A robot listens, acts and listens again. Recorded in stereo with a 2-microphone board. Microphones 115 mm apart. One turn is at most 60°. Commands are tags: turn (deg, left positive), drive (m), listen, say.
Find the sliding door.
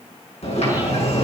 <turn deg="60"/>
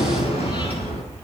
<turn deg="55"/>
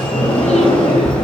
<turn deg="10"/>
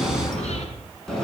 <say>Found it: a sliding door, straight ahead, over 4 m away.</say>